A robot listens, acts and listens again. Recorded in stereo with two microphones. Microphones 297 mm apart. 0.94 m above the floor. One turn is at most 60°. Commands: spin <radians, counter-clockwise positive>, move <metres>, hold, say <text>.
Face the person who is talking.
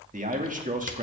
spin -0.44
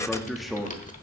say Facing the man speaking.